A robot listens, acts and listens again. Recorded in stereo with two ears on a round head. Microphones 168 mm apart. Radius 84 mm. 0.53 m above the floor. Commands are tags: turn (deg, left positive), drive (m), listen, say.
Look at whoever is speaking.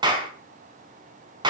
<listen/>
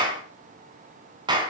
<listen/>
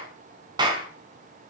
<say>I can't make out anyone speaking, only a clap.</say>